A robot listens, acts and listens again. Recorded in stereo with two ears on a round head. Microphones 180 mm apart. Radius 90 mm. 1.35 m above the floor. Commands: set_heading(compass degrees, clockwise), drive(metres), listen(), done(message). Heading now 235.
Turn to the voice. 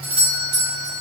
listen()
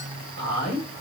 set_heading(280)
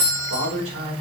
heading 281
set_heading(11)
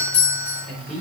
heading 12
done("Found it: a man speaking, straight ahead, over 4 m away.")